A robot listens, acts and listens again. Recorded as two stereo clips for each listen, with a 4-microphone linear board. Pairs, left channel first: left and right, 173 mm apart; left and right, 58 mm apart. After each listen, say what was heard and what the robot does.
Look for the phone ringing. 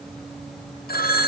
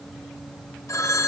The phone ringing: about 60° left or 120° left. Turn 60° left.
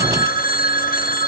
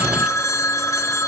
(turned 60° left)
So it is at 60° left. Turn 60° left.
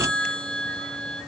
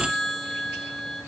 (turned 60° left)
Facing the phone ringing.